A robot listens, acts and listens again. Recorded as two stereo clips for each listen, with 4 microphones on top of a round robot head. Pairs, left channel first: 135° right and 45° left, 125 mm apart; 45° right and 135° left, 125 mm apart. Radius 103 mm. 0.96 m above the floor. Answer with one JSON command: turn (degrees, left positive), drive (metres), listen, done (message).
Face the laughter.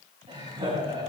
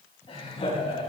{"done": "Found it: laughter, straight ahead, over 4 m away."}